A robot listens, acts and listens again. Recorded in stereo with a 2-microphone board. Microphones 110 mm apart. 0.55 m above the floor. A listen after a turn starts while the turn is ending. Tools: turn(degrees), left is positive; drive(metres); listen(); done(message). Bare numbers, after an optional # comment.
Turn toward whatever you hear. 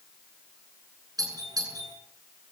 # The doorbell: about 35° right or 145° right.
turn(-35)
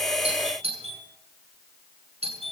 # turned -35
# So it is at 110° right.
turn(-110)
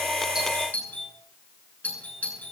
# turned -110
# The doorbell is now 15° left.
turn(15)
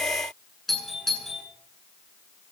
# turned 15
done("Facing the doorbell, over 4 m away.")